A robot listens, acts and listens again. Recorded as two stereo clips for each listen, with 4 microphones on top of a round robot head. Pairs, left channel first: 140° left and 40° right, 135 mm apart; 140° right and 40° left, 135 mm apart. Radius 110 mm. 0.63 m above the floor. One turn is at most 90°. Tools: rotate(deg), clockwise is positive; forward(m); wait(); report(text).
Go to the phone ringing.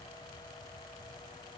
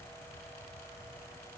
wait()
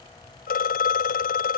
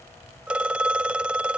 rotate(-90)
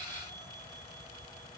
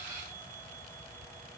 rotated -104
rotate(-20)
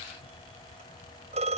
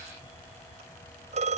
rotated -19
forward(1.0)
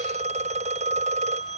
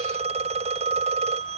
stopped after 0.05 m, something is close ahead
report("Blocked. The phone ringing is further on, straight ahead.")